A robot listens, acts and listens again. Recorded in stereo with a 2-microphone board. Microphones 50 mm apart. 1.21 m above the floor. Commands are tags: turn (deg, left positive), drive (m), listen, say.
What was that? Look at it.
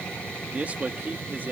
<turn deg="-40"/>
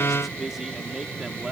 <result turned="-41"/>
<turn deg="-15"/>
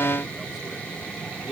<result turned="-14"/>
<turn deg="-10"/>
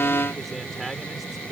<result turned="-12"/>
<say>Facing the man speaking.</say>